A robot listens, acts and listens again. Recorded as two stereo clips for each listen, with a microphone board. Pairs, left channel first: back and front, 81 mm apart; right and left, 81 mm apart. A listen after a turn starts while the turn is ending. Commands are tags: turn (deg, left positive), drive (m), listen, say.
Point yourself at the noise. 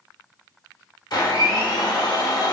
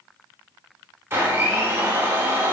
<turn deg="150"/>
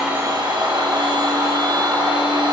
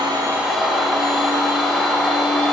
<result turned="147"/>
<say>Found it: a blender, straight ahead.</say>